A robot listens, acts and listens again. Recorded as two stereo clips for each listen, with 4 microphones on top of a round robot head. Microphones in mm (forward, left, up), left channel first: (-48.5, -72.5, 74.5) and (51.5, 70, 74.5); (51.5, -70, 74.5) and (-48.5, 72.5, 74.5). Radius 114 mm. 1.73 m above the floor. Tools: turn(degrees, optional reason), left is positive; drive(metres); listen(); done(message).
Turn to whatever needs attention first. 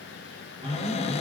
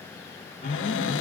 done("Found it: an alarm, straight ahead.")